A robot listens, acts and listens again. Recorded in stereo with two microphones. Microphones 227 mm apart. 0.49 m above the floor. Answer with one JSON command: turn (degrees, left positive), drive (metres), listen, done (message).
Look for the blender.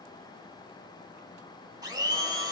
{"turn": -20}
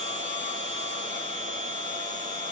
{"turn": -140}
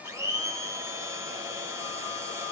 {"turn": -15}
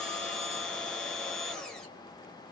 {"done": "Found it: a blender, straight ahead."}